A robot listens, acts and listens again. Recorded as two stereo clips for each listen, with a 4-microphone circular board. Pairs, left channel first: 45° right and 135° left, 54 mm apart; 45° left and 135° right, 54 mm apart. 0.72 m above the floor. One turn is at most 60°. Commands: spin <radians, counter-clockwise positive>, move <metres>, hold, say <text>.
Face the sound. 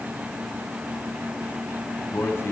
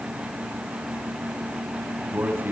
spin -1.05
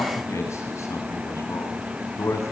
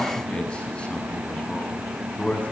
spin -0.35
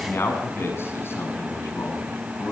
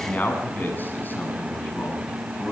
say Found it: a man speaking, straight ahead.